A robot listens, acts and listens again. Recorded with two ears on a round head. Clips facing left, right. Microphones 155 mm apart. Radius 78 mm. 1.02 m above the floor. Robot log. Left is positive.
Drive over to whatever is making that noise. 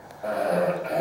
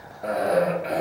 cmd yaw -30
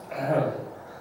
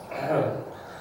note: So it is at 15° left.
cmd yaw +15
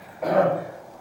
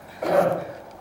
cmd fwd 1.0
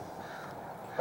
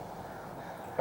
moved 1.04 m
note: The cough is now 15° right.
cmd yaw -15
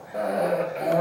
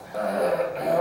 cmd fwd 1.0
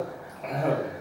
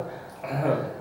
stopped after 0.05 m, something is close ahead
end: Arrived at the cough, straight ahead.